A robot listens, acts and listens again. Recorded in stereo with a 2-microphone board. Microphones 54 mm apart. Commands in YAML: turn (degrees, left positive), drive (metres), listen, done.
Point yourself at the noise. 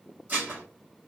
turn: -30
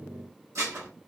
turn: -120
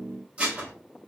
turn: -20
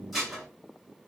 done: "Found it: dishes clattering, straight ahead, under 1 m away."